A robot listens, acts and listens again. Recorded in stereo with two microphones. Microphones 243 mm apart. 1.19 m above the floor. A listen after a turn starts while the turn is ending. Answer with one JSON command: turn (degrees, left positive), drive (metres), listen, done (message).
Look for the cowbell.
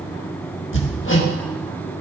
{"listen": true}
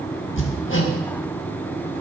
{"listen": true}
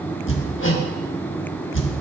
{"done": "I can't make out a cowbell to turn to."}